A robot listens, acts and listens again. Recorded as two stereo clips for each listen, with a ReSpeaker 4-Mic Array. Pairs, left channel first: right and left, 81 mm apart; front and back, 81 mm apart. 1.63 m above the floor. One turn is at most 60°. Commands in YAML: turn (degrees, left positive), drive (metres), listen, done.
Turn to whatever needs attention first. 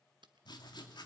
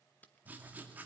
listen: true
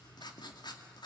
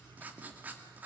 listen: true
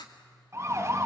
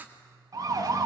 turn: 60
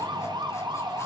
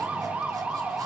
turn: 60
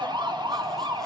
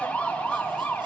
turn: 60
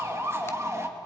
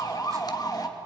turn: 40
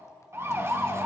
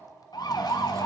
turn: 35
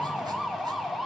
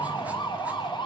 done: "Found it: a siren, straight ahead, 2 to 4 m away."